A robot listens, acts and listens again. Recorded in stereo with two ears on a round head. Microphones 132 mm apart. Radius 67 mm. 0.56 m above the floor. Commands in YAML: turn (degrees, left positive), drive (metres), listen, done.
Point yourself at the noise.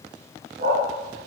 turn: -60
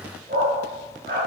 turn: -60
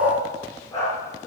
turn: 20
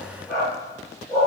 done: "Found it: a dog barking, straight ahead, over 4 m away."